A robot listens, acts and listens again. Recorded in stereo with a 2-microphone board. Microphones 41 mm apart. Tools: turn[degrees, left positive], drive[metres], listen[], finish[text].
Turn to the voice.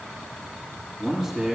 Action: turn[-30]
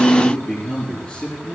Thought: So it is at 25° left.
Action: turn[25]
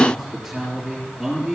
Action: finish[Facing the man speaking, over 4 m away.]